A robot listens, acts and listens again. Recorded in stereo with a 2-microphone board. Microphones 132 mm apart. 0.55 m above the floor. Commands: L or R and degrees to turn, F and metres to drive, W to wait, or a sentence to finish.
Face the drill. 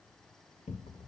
W
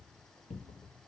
W
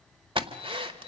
R40
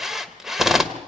Facing the drill, 1 to 2 m away.